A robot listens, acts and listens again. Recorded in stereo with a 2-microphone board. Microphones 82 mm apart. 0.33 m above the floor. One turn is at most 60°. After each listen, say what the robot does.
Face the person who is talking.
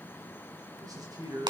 Turn 45° right.
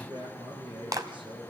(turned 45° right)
Turn 60° right.
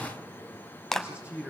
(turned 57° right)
Turn 15° right.
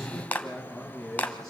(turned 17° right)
Turn 10° left.
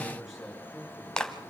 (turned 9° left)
Facing the man speaking.